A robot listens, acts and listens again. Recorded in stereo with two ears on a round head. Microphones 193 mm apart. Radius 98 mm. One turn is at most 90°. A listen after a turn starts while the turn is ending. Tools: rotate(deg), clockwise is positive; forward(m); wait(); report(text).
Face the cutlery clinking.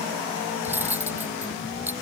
rotate(30)
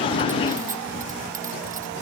wait()
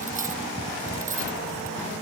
rotate(90)
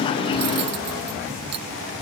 rotate(80)
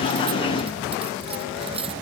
rotate(25)
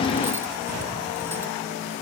wait()
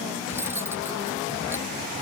rotate(10)
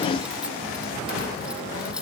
report("Found it: cutlery clinking, straight ahead.")